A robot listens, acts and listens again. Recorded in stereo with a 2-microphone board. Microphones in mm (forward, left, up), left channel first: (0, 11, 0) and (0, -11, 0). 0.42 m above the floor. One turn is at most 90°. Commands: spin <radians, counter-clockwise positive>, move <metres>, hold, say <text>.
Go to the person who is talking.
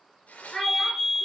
spin 0.52
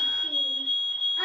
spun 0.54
hold
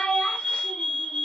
spin 1.57
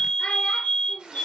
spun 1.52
spin 0.87
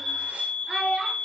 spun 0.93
move 1.0
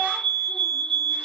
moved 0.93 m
hold
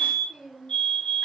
hold
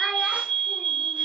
say I heard a child speaking from this way, but can't make it out now. I did not reach it.